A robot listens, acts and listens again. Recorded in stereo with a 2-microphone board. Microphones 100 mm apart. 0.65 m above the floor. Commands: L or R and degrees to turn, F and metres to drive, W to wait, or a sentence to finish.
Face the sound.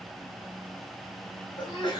L50
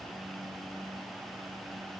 W
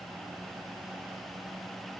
I heard a sneeze, but can't make it out now. It was about straight ahead or 80° left.